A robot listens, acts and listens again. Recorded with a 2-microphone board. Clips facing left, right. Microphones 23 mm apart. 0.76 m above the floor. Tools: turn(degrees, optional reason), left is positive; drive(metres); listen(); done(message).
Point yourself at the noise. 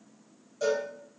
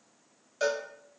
turn(degrees=-50, reason="The cowbell: about 50° right or 130° right.")
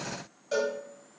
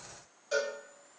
done("Found it: a cowbell, straight ahead.")